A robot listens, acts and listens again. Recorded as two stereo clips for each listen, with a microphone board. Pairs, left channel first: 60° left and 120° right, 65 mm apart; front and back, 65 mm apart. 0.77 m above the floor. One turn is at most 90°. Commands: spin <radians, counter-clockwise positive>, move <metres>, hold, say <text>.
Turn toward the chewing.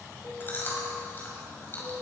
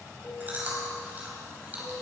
spin 1.57
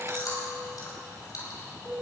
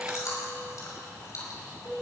spin 0.61
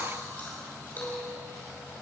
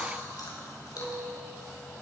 say Found it: chewing, straight ahead.